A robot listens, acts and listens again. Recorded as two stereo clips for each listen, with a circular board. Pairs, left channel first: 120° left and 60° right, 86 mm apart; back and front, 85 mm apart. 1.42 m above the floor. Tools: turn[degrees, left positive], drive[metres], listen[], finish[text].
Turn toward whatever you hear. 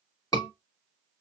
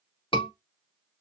Thought: The scream: 165° left.
Action: turn[165]
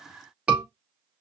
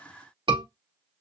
Thought: The scream is now 15° left.
Action: turn[15]
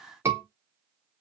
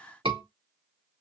Action: finish[Found it: a scream, straight ahead, 2 to 4 m away.]